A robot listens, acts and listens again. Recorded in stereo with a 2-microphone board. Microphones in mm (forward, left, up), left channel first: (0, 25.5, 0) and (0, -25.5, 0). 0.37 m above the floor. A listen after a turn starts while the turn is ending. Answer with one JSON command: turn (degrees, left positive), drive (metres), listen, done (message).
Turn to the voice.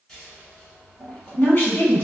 {"turn": 40}
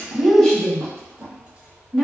{"turn": 10}
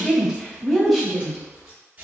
{"done": "Found it: a woman speaking, straight ahead."}